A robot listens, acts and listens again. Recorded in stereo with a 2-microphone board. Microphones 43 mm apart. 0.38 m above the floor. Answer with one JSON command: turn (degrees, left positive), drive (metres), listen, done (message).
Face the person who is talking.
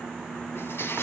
{"listen": true}
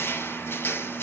{"listen": true}
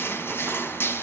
{"done": "I can't make out anyone speaking, only crushing."}